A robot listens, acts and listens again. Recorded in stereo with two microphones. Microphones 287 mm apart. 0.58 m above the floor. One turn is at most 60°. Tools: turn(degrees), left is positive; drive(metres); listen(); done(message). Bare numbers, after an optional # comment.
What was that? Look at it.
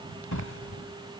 turn(60)
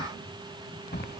# So it is at 35° left.
turn(35)
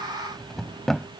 done("Found it: a drawer, straight ahead.")